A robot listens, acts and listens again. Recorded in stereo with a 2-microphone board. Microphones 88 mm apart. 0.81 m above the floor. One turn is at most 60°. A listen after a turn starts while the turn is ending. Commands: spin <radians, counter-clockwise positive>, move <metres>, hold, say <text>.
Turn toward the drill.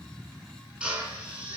spin -0.52
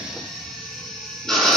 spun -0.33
say Found it: a drill, straight ahead, over 4 m away.